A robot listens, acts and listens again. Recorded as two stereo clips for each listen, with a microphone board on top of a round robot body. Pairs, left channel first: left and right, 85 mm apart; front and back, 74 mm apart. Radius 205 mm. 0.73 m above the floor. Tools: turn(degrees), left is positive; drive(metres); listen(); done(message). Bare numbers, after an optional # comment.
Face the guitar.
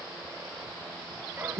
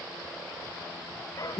listen()
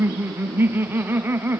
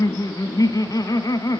listen()
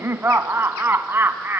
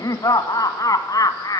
done("I can't make out a guitar to turn to.")